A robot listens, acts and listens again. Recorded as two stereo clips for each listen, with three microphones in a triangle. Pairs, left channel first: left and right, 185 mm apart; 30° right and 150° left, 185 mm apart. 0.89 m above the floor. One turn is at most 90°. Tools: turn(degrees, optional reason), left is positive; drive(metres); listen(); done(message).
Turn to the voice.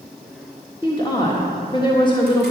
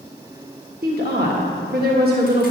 turn(degrees=90, reason="The woman speaking: 150° left.")
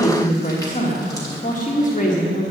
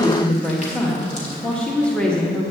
turn(degrees=55, reason="The woman speaking is now 55° left.")
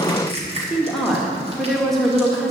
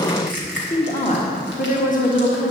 done("Facing the woman speaking, 1 to 2 m away.")